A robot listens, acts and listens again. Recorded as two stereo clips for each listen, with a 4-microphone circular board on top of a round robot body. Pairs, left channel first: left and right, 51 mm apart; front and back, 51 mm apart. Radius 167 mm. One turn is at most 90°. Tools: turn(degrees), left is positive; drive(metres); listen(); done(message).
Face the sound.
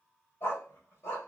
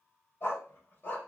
turn(degrees=60)
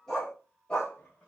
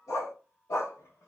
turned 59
turn(degrees=20)
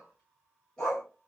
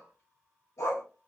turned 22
turn(degrees=15)
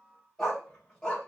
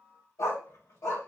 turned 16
turn(degrees=15)
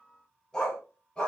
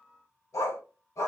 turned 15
turn(degrees=15)
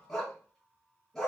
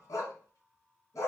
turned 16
done("Facing the dog barking.")